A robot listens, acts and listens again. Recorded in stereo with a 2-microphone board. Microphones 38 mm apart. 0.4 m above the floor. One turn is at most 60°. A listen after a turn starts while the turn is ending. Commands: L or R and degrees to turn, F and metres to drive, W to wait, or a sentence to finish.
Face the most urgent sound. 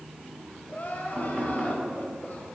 L50
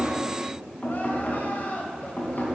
L60
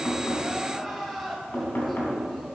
Facing the crying.